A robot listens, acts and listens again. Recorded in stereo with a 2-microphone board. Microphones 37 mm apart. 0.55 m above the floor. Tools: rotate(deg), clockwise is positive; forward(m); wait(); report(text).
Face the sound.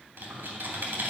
rotate(90)
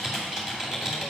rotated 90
rotate(10)
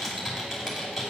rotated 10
report("Facing the typing on a keyboard.")